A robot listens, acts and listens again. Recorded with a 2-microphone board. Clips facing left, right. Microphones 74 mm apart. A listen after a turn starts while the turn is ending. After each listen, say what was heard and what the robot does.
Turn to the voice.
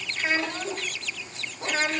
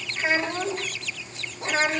The child speaking: about 25° right or 155° right. Turn 25° right.
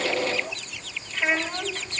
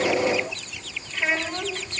Found it: a child speaking, straight ahead.